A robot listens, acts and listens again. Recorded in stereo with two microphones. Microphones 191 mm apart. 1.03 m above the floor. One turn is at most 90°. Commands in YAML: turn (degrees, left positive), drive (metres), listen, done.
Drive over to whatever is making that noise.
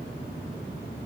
listen: true
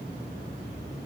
listen: true
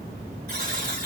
turn: -50
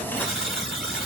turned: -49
drive: 1.0
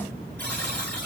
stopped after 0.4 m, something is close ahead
turn: 10
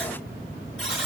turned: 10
done: "Blocked. The buzzer is further on, straight ahead."